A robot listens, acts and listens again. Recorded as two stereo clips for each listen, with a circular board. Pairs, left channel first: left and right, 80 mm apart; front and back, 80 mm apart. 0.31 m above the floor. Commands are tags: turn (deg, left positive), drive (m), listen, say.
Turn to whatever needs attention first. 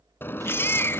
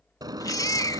<turn deg="30"/>
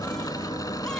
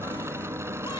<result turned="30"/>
<listen/>
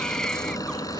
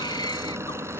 <turn deg="10"/>
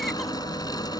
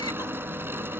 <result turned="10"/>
<listen/>
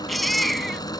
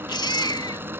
<say>Found it: a baby crying, straight ahead.</say>